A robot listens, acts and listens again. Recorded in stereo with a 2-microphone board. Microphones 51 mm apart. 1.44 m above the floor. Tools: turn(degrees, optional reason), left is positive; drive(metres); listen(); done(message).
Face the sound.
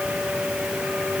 listen()
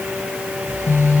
turn(degrees=45, reason="The phone buzzing: about 45° left or 135° left.")
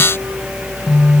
done("Facing the phone buzzing, 1 to 2 m away.")